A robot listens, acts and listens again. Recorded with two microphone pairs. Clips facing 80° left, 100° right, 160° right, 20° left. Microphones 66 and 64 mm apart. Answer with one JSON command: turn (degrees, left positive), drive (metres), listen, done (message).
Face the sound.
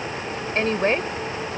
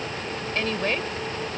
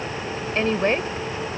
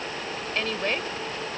{"turn": 140}
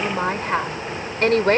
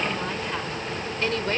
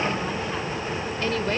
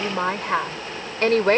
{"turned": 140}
{"turn": 50}
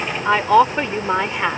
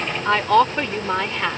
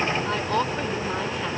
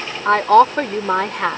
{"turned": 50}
{"turn": 10}
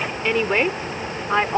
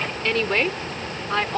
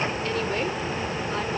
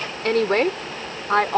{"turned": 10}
{"turn": 15}
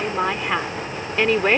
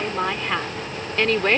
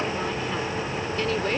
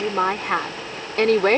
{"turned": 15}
{"done": "Found it: a woman speaking, straight ahead."}